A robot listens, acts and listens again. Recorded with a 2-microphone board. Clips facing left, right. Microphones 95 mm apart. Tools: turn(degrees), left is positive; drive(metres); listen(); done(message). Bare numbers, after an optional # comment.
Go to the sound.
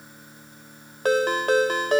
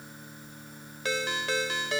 # The ringtone: about 50° left or 130° left.
turn(50)
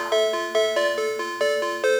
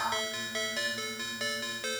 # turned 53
# So it is at 75° left.
turn(75)
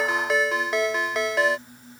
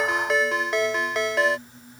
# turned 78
drive(1.0)
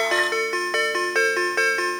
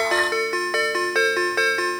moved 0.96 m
drive(1.0)
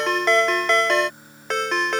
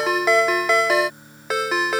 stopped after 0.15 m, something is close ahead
done("Arrived at the ringtone, straight ahead.")